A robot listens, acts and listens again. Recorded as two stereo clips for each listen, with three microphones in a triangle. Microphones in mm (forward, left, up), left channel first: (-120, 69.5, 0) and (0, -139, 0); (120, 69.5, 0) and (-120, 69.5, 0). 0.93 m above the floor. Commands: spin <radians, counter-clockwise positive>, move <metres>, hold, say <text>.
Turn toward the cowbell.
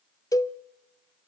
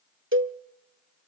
spin -2.88
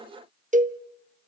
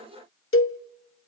spin -0.17
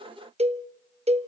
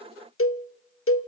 say Found it: a cowbell, straight ahead, under 1 m away.